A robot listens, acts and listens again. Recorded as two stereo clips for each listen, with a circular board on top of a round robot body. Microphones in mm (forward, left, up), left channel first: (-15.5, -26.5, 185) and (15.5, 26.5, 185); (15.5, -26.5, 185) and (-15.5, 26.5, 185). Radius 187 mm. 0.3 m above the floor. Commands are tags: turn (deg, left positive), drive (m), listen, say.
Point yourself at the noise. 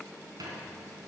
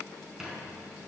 <turn deg="40"/>
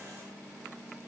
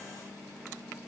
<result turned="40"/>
<listen/>
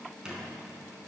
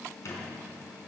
<turn deg="-15"/>
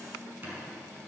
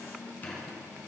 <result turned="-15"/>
<say>Facing the squeak.</say>